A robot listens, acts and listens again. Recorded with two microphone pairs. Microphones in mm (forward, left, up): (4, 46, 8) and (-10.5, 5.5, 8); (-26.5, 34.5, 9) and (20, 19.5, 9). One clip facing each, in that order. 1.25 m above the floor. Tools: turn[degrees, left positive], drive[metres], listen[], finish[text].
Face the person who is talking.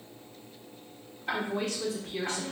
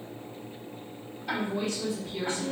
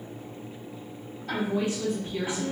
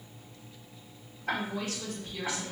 Thought: The woman speaking: 90° left.
Action: turn[90]
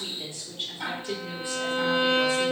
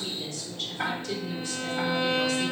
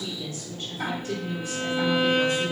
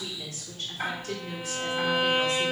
Action: finish[Found it: a woman speaking, straight ahead.]